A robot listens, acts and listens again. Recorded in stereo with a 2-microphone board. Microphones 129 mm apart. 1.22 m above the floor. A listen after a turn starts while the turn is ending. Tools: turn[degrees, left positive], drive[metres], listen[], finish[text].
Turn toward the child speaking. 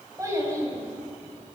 Thought: The child speaking: about 25° right or 155° right.
Action: turn[-25]
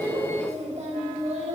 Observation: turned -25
Thought: So it is at 125° right.
Action: turn[-125]
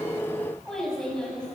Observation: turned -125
Action: finish[Found it: a child speaking, straight ahead, over 4 m away.]